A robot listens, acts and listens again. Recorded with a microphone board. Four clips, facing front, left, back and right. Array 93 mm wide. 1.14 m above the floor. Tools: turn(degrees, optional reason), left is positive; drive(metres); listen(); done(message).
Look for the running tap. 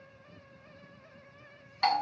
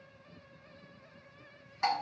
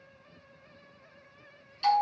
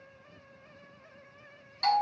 listen()
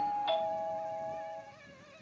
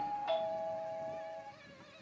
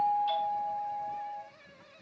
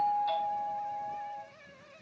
listen()
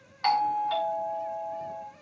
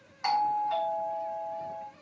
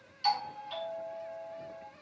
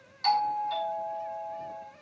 done("I can't make out a running tap to turn to.")